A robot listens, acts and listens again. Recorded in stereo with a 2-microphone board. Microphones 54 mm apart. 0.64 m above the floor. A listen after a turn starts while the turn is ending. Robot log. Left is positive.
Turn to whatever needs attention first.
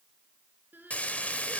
note: The crying: about 40° right or 140° right.
cmd yaw -40
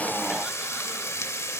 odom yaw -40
cmd idle
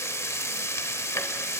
cmd idle
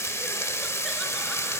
end: I heard crying, but can't make it out now. It was about straight ahead or 100° right.